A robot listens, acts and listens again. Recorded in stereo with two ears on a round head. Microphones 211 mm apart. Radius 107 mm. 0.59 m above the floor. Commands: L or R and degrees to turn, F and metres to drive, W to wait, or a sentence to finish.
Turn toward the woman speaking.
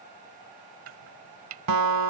W
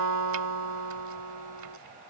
W
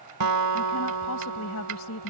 L75
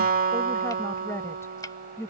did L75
L10
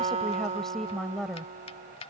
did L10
Found it: a woman speaking, straight ahead.